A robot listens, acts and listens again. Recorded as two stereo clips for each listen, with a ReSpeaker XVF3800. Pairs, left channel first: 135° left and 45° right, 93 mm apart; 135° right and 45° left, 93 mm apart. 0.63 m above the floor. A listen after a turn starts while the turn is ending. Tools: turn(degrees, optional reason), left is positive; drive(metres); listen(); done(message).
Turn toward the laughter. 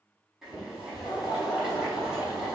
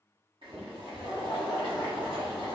turn(degrees=135, reason="The laughter: 135° left.")
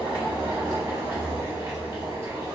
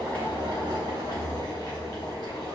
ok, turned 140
listen()
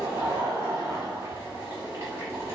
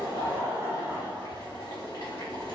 done("Facing the laughter, 1 to 2 m away.")